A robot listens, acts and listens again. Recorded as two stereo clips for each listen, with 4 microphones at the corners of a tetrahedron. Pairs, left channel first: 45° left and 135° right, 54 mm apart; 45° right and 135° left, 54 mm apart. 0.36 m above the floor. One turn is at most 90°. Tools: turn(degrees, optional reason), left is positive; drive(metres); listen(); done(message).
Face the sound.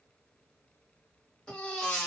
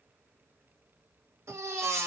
turn(degrees=90, reason="The baby crying: 120° left.")
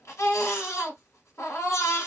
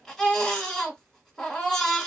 turn(degrees=35, reason="The baby crying is now 35° left.")
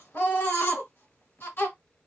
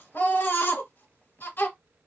done("Found it: a baby crying, straight ahead.")